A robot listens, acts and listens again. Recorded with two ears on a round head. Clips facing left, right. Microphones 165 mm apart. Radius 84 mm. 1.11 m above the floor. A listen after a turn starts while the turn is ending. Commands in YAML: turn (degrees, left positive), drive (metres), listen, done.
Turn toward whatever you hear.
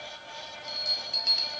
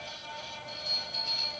turn: 90
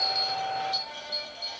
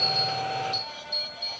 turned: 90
done: "Found it: a bell, straight ahead, 1 to 2 m away."